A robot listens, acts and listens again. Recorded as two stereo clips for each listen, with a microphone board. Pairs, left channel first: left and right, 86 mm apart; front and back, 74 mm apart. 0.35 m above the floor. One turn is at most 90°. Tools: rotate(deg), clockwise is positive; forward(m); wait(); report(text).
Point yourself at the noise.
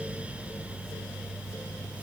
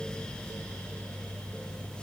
wait()
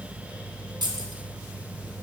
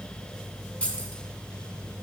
rotate(70)
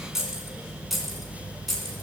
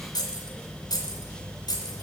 report("Facing the keys jangling.")